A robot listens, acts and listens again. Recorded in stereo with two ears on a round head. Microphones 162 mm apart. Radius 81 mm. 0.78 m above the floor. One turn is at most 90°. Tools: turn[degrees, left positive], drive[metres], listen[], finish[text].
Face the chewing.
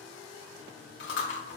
Thought: The chewing: about 70° left or 110° left.
Action: turn[70]
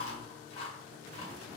Thought: So it is at 40° left.
Action: turn[40]
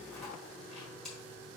Action: finish[Found it: chewing, straight ahead, 1 to 2 m away.]